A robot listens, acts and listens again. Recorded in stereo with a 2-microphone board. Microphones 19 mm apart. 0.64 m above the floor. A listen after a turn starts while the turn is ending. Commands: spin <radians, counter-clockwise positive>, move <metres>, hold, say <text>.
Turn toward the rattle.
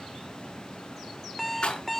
spin 1.05
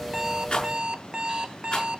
spin 1.13
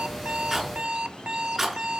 say Facing the rattle, over 4 m away.